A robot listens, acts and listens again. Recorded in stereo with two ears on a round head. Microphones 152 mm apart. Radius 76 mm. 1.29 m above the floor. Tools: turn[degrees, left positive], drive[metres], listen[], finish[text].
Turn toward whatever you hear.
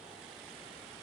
Action: listen[]
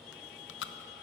Action: turn[90]
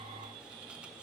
Action: listen[]
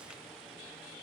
Action: listen[]
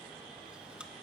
Action: finish[Found it: chewing, straight ahead.]